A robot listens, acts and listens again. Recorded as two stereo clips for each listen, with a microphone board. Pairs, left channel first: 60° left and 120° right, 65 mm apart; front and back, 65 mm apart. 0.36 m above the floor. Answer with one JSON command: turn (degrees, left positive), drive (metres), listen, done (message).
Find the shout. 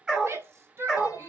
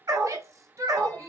{"turn": -160}
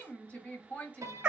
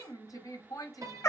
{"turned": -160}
{"done": "Found it: a shout, straight ahead."}